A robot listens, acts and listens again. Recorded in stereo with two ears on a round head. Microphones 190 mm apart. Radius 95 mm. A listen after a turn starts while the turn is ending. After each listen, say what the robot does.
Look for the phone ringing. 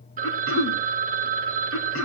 Turn 40° right.
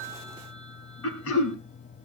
Keep listening.
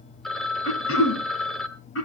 Facing the phone ringing, 1 to 2 m away.